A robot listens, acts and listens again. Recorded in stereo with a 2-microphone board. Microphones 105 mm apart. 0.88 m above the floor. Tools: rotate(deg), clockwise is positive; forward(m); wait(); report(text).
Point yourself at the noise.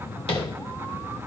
rotate(-65)
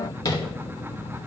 rotate(-40)
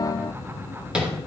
rotate(10)
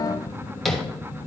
report("Found it: tapping, straight ahead.")